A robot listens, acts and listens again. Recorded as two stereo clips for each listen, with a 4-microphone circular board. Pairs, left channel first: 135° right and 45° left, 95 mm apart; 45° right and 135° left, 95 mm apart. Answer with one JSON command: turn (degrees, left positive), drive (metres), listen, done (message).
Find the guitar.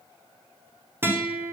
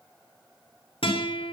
{"turn": -20}
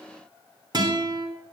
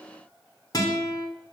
{"done": "Found it: a guitar, straight ahead."}